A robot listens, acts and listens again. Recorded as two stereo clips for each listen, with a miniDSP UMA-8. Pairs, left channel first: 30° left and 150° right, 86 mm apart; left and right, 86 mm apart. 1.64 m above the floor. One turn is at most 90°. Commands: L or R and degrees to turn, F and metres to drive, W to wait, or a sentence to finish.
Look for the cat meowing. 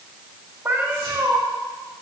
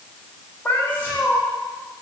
L90
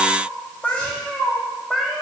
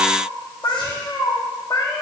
L90
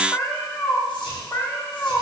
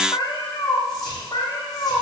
L85
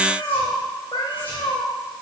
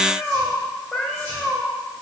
Facing the cat meowing.